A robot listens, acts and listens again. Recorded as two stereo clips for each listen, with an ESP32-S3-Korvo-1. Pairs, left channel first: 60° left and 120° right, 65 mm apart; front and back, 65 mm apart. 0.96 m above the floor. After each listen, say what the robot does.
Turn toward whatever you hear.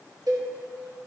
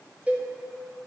Turn 110° right.
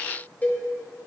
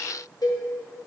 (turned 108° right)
Facing the cowbell, 1 to 2 m away.